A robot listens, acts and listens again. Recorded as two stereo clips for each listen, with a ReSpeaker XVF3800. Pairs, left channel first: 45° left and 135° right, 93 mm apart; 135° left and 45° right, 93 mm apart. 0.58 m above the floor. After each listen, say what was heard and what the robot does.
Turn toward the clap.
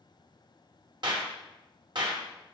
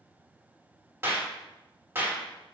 The clap: 105° right. Turn 105° right.
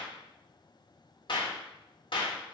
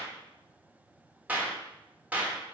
The clap is now 25° left. Turn 25° left.
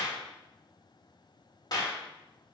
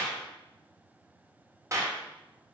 Found it: a clap, straight ahead, 1 to 2 m away.